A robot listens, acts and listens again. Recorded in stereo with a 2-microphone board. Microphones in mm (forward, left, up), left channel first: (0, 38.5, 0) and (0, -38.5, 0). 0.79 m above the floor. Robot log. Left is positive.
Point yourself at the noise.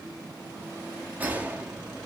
note: The gunshot: about 25° right or 155° right.
cmd yaw -25
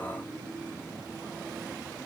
cmd idle
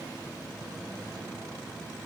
end: I heard a gunshot, but can't make it out now. It was about straight ahead or 130° right.